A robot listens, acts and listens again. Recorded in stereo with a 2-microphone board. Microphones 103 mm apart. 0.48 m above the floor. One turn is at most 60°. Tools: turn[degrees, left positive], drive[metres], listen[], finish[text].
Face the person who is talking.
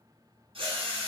Action: listen[]
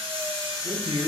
Thought: The man speaking: about 65° right or 115° right.
Action: turn[-60]
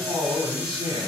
Thought: So it is at 50° right.
Action: turn[-50]
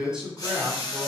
Thought: The man speaking is now 10° right.
Action: turn[-10]
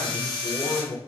Action: finish[Facing the man speaking, 2 to 4 m away.]